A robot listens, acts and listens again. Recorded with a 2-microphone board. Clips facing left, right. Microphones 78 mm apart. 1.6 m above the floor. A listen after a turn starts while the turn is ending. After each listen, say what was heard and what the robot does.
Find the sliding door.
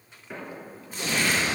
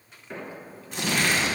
Turn 30° left.
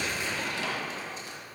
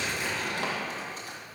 Keep listening.
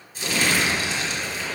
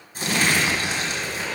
Keep listening.
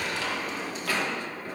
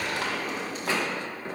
So it is at 30° right. Turn 30° right.
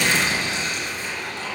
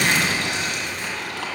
Keep listening.
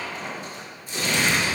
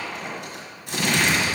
Facing the sliding door.